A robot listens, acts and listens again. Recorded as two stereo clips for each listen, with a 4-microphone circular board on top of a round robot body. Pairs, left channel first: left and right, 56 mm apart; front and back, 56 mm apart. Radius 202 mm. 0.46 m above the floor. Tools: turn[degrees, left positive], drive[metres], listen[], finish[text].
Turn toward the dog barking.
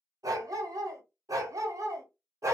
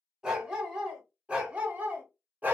Thought: The dog barking: 120° right.
Action: turn[-120]
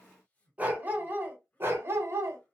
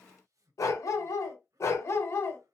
Thought: The dog barking is now 45° right.
Action: turn[-45]
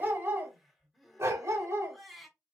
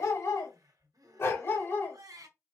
Thought: The dog barking is now 50° right.
Action: turn[-50]
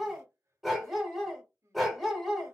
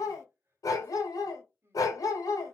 Action: finish[Facing the dog barking, 1 to 2 m away.]